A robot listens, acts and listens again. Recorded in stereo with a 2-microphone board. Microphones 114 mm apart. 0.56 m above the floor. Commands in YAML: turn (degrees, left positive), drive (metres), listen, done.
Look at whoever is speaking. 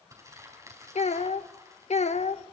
turn: 90
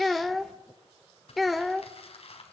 done: "Facing the child speaking, under 1 m away."